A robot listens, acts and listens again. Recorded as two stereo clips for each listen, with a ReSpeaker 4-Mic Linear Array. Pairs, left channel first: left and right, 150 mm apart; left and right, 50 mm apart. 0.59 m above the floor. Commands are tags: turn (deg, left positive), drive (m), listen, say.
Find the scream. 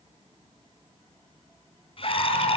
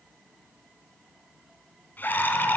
<turn deg="40"/>
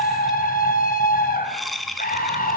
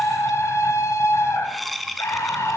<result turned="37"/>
<turn deg="100"/>
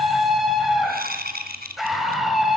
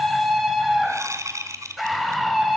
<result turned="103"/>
<say>Found it: a scream, straight ahead.</say>